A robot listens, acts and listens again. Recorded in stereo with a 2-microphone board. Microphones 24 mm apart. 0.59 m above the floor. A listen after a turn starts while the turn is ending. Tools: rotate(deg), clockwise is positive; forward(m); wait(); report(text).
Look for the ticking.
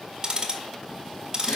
rotate(35)
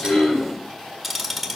report("Facing the ticking.")